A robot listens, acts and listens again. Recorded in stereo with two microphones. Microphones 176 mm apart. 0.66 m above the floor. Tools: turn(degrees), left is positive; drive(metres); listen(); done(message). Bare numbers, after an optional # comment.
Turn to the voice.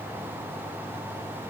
listen()
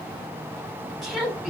turn(30)
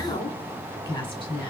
# So it is at 150° left.
turn(150)
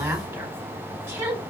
# The woman speaking is now 15° right.
turn(-15)
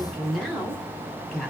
done("Found it: a woman speaking, straight ahead, 1 to 2 m away.")